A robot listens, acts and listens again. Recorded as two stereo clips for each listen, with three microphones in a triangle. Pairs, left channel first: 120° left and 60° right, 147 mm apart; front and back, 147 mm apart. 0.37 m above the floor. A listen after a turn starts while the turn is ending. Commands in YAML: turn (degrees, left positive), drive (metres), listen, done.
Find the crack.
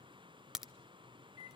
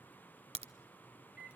turn: -145
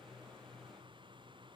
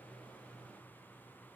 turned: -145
done: "Facing where the crack came from. I can't hear it now."